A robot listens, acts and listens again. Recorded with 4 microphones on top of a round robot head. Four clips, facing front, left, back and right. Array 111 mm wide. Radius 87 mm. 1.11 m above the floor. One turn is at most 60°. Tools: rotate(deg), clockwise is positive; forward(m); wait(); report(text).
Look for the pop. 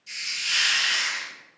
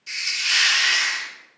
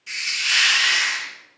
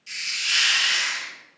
wait()
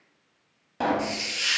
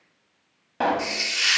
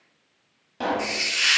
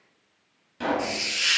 rotate(-60)
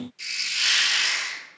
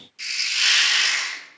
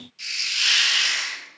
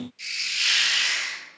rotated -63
rotate(-10)
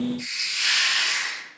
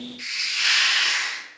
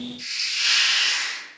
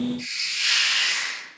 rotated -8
report("Facing where the pop came from. I can't hear it now.")